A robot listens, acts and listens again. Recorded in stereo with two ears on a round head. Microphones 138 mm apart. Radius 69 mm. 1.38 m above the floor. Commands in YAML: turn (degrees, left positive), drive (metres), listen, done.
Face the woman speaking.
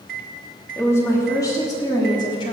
turn: 30
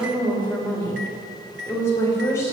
turn: 20
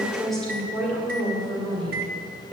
done: "Facing the woman speaking."